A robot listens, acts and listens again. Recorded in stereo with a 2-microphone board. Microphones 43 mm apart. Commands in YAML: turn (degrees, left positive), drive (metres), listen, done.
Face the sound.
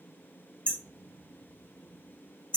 turn: 25
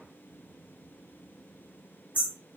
turn: 130
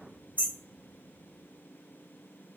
turn: -40
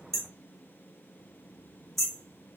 done: "Found it: hammering, straight ahead, 1 to 2 m away."